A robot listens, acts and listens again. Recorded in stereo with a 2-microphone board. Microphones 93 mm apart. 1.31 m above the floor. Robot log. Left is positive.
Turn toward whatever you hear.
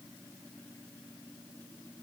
cmd idle
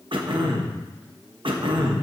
note: The throat clearing: about 65° right or 115° right.
cmd yaw -65
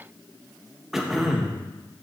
end: Facing the throat clearing, 1 to 2 m away.